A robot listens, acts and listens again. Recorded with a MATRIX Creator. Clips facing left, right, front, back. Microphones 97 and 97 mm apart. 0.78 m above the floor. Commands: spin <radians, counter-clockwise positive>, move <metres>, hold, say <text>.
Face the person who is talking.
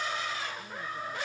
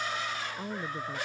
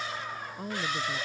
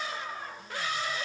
spin -0.79
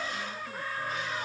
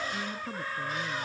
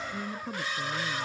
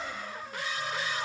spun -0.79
hold
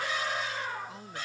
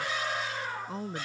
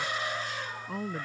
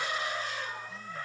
spin -0.61
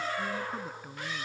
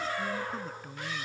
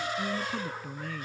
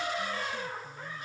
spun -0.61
say Found it: a woman speaking, straight ahead.